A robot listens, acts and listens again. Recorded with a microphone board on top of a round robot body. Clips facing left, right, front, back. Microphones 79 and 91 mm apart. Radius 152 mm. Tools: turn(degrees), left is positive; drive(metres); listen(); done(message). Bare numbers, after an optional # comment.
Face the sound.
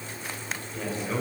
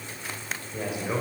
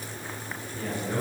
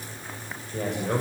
# The man speaking: 165° right.
turn(-165)
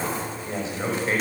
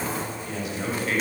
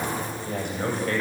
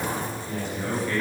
# The man speaking is now 25° left.
turn(25)
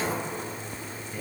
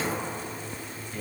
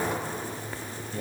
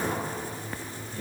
# The man speaking is now 10° left.
turn(10)
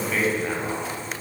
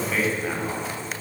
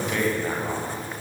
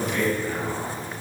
done("Facing the man speaking.")